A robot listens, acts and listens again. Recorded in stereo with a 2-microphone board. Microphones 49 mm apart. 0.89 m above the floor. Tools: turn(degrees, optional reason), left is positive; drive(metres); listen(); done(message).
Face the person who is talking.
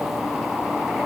listen()
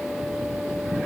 listen()
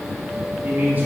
turn(degrees=-35, reason="The man speaking: about 35° right or 145° right.")
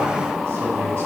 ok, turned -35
listen()
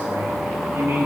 turn(degrees=-105, reason="So it is at 105° right.")
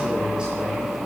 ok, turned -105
turn(degrees=-20, reason="The man speaking is now 20° right.")
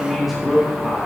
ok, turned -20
done("Facing the man speaking, 2 to 4 m away.")